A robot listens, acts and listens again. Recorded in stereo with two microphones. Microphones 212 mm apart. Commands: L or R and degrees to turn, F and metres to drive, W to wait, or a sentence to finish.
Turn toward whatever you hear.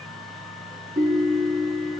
R40
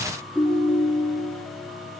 Found it: a ringtone, straight ahead, 1 to 2 m away.